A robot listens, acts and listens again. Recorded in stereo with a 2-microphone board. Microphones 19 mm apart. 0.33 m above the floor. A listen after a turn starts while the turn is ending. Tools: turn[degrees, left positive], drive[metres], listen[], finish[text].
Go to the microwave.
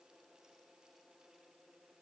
Action: listen[]
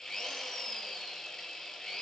Action: listen[]
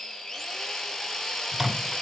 Action: turn[30]
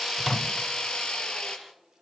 Action: listen[]
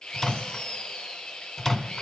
Thought: So it is at 150° left.
Action: turn[150]
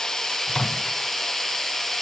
Thought: The microwave is now 40° left.
Action: turn[40]
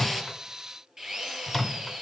Action: drive[1.0]
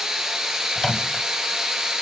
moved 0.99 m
Action: drive[1.0]
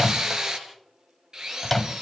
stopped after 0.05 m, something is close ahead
Thought: The microwave is now 10° left.
Action: turn[10]
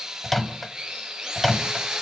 Action: finish[I am next to the microwave.]